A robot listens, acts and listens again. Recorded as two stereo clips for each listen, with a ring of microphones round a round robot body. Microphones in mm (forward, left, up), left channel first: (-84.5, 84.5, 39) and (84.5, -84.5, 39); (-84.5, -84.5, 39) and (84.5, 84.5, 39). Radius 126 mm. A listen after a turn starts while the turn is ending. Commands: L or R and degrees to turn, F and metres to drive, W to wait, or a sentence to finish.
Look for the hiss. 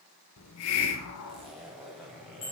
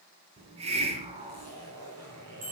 L110
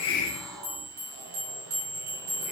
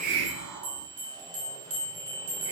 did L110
L40
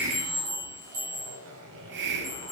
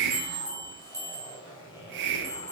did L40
Facing the hiss, 1 to 2 m away.